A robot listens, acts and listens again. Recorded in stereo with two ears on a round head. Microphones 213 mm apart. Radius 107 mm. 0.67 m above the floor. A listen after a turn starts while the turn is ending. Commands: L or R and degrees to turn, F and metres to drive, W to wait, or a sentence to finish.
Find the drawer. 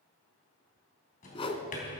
L35
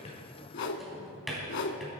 Facing the drawer.